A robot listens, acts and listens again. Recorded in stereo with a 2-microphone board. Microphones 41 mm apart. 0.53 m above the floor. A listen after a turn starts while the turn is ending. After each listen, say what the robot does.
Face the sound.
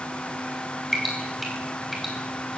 Turn 30° right.
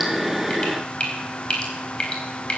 Turn 30° left.
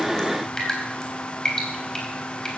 Turn 15° left.
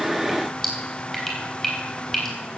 Found it: dripping, straight ahead, 2 to 4 m away.